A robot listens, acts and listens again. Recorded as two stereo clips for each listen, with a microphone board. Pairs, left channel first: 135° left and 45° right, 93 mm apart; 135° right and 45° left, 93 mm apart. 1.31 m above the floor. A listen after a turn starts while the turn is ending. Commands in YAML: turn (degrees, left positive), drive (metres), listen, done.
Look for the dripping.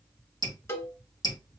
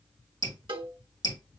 turn: 180
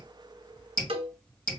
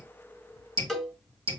turn: 60
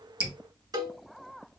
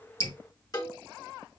listen: true
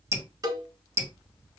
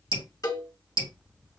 turn: 20
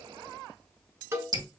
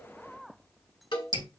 done: "Facing the dripping."